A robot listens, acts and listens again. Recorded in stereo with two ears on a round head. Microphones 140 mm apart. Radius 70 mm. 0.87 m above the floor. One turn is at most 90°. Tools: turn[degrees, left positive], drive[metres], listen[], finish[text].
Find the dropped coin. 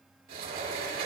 Action: listen[]
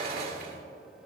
Action: listen[]
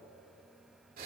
Action: finish[I can't make out a dropped coin, only a sliding door.]